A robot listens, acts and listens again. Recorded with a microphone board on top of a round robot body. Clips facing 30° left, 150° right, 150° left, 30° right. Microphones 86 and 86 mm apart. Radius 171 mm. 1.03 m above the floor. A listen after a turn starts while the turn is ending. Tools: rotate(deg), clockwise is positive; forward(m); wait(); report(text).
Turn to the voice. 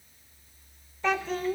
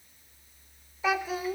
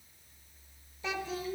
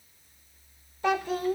rotate(70)
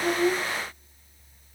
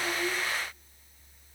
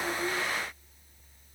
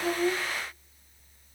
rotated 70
wait()
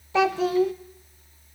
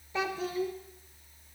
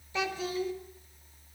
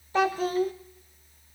rotate(-15)
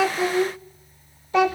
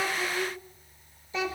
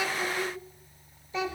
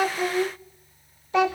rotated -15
report("Found it: a child speaking, straight ahead, under 1 m away.")